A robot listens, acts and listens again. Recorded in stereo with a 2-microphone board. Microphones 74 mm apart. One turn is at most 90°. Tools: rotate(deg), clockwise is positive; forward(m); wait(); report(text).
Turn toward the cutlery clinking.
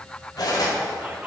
rotate(-60)
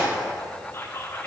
wait()
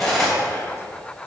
report("Found it: cutlery clinking, straight ahead, 2 to 4 m away.")